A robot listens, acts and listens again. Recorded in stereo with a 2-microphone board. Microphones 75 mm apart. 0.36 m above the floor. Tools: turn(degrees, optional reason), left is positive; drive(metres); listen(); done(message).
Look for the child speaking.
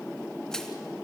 listen()
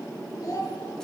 turn(degrees=50, reason="The child speaking: about 50° left or 130° left.")
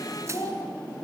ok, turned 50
turn(degrees=70, reason="So it is at 70° left.")
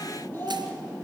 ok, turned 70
turn(degrees=30, reason="The child speaking is now 30° left.")
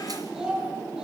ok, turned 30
turn(degrees=-10, reason="The child speaking is now 10° right.")
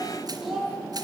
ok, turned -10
done("Found it: a child speaking, straight ahead, over 4 m away.")